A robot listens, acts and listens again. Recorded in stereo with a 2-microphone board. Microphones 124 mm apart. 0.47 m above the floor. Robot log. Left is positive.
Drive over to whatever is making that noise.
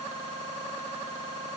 cmd idle
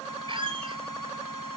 note: The squeak: about 45° right or 135° right.
cmd yaw -45
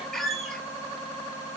cmd fwd 1.0
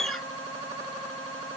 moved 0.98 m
cmd fwd 1.0
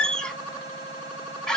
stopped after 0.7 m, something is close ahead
end: I am next to the squeak.